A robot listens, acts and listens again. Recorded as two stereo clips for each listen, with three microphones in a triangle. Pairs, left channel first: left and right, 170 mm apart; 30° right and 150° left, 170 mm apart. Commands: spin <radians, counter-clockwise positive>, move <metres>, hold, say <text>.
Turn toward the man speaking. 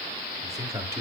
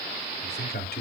spin -0.26
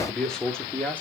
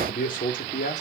spin 0.17
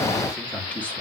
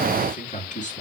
spin 0.17
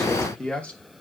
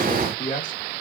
say Found it: a man speaking, straight ahead, 2 to 4 m away.